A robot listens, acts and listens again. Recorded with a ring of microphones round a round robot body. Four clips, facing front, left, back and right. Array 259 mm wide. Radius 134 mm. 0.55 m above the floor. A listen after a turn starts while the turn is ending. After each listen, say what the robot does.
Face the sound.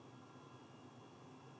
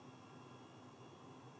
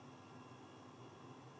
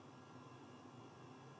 Keep listening.
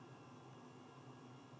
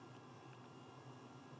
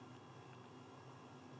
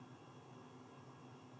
Keep listening.
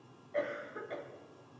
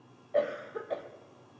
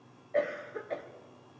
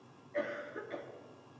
Turn 120° left.
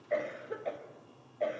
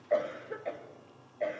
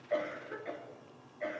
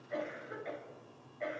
Turn 40° left.
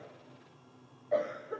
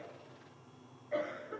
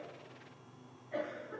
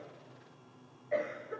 Turn 25° right.
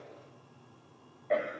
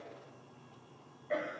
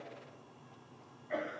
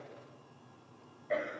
Turn 10° right.
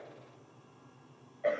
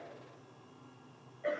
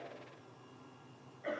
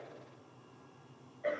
Found it: a cough, straight ahead.